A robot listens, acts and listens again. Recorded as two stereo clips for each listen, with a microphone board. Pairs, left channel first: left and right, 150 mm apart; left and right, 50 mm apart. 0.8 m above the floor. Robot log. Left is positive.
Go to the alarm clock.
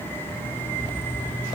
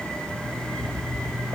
cmd yaw +30
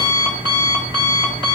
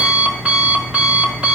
note: So it is at 30° right.
cmd yaw -30
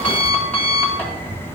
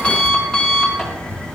note: The alarm clock is now 10° left.
cmd yaw +10
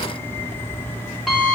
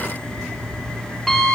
cmd fwd 1.0
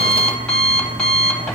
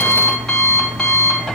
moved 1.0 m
cmd fwd 1.0
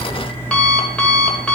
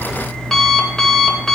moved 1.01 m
note: The alarm clock is now 10° left.
cmd yaw +10
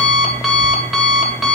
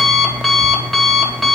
cmd fwd 1.0
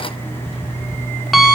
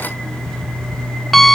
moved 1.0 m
cmd fwd 1.0
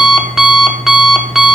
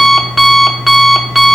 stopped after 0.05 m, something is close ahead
end: I am next to the alarm clock.